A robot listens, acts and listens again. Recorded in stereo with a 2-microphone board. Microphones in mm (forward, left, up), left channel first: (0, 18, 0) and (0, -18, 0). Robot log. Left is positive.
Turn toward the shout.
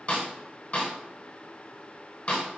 cmd idle
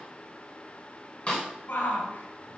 note: The shout: about 70° left or 110° left.
cmd yaw +70
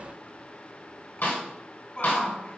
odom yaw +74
note: So it is at 35° left.
cmd yaw +35
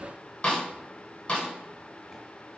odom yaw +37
cmd idle
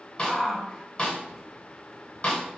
end: Facing the shout.